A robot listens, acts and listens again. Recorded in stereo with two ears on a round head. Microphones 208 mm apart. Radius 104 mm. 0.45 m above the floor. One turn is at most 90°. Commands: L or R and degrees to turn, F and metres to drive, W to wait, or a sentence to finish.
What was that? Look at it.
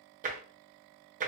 R35
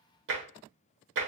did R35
R90
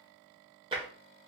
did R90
R25
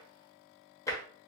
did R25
L15
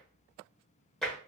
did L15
Found it: tapping, straight ahead.